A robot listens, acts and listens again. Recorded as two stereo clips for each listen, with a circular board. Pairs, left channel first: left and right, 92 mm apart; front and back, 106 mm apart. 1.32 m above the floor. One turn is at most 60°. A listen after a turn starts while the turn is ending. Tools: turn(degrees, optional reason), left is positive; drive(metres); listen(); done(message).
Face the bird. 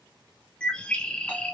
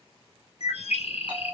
turn(degrees=10, reason="The bird: 10° left.")
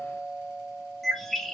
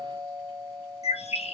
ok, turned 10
done("Facing the bird.")